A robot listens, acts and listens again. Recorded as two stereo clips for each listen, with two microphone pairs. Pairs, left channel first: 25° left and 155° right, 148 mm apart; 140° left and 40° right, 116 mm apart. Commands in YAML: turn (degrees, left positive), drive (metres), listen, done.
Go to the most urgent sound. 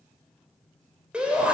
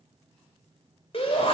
turn: 125
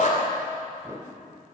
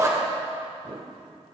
turn: 15
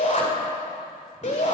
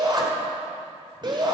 drive: 1.0
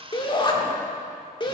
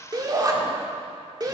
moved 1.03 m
turn: -10
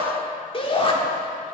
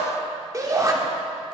drive: 1.0
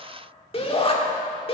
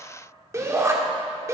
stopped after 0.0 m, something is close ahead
done: "I am next to the shout."